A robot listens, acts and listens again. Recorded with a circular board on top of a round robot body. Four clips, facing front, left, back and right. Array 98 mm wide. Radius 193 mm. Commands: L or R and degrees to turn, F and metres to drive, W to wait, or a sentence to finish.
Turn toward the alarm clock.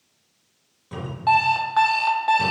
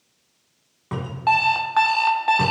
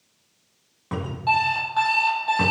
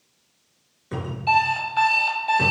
L70
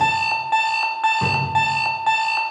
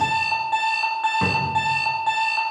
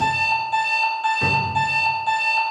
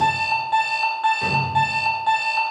Facing the alarm clock, 1 to 2 m away.